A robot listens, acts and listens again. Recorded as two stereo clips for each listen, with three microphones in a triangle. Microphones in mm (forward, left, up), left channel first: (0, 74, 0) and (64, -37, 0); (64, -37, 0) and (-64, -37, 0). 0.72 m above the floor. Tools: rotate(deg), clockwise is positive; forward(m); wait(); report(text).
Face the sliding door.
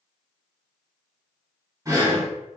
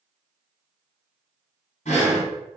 wait()
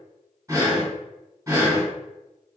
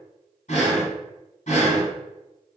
wait()
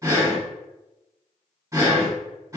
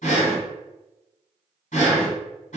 report("I can't make out a sliding door to turn to.")